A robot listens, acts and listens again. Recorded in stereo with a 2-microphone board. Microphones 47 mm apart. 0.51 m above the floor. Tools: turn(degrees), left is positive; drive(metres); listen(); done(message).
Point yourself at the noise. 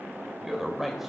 turn(degrees=-30)
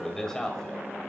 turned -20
turn(degrees=30)
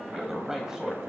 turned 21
turn(degrees=-10)
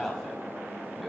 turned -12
done("Facing the man speaking, 2 to 4 m away.")